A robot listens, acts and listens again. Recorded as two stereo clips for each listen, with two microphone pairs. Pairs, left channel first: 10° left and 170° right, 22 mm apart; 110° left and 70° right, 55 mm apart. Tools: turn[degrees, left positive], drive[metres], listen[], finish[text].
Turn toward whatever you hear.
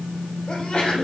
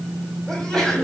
Thought: The sneeze: 30° left.
Action: turn[30]
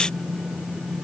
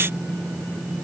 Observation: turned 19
Thought: Nothing new. It was at 10° left.
Action: turn[10]
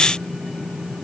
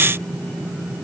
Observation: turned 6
Action: finish[I heard a sneeze from this way, but can't make it out now.]